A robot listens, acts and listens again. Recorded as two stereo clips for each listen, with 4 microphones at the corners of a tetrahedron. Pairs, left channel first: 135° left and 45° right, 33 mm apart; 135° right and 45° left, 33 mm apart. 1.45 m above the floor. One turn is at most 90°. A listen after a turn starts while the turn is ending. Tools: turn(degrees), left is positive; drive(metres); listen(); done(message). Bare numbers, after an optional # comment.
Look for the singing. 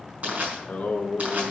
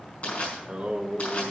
# The singing: 90° left.
turn(90)
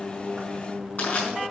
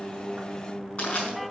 done("Facing the singing.")